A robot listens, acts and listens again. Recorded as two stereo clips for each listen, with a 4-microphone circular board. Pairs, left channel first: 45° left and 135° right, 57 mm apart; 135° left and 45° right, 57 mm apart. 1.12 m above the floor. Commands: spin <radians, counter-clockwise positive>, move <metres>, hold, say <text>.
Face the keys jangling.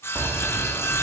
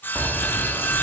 spin -1.83
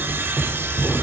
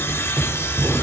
spin -0.26
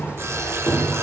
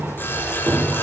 say Facing the keys jangling, 2 to 4 m away.